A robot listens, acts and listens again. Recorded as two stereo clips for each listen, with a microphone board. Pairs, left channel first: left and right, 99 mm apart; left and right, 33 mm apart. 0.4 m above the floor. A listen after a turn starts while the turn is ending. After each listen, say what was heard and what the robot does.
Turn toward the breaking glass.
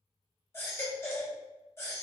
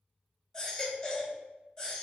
Keep listening.
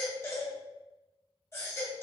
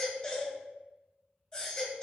Keep listening.
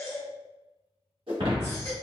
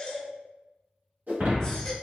The breaking glass: about 70° right or 110° right. Turn 70° right.
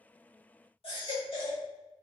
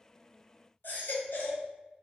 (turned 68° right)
Keep listening.
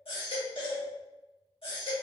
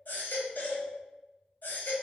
I heard breaking glass, but can't make it out now. It was about 5° right or 40° right.